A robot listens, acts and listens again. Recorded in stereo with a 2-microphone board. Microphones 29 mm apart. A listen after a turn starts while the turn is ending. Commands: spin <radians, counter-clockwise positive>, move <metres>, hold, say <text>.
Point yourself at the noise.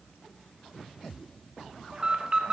spin -0.52
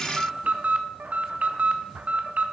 spin -2.09
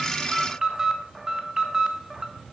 spin -0.35
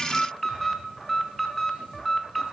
say Found it: an alarm, straight ahead, 1 to 2 m away.